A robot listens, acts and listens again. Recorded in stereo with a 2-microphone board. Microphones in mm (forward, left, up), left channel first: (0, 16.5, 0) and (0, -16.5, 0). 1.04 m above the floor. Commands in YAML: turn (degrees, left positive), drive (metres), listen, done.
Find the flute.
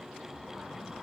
listen: true
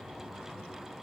listen: true
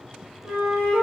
turn: -90
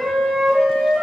done: "Found it: a flute, straight ahead, under 1 m away."